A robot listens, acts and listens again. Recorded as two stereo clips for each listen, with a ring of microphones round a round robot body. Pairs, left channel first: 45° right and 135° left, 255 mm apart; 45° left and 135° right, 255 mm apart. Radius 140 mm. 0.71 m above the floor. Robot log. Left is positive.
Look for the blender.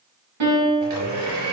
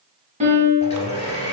note: The blender: 115° left.
cmd yaw +115
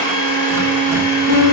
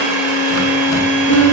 note: The blender is now 50° right.
cmd yaw -50
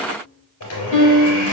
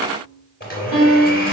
note: The blender is now 10° right.
cmd yaw -10
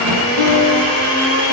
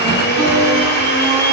end: Found it: a blender, straight ahead, 2 to 4 m away.